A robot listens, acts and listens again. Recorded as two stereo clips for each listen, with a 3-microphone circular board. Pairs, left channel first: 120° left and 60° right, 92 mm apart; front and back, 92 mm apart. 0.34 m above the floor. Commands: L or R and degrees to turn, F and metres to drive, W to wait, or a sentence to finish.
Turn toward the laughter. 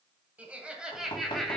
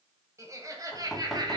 R155
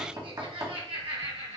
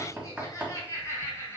R60
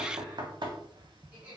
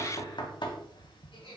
L15
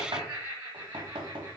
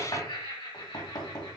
Facing the laughter.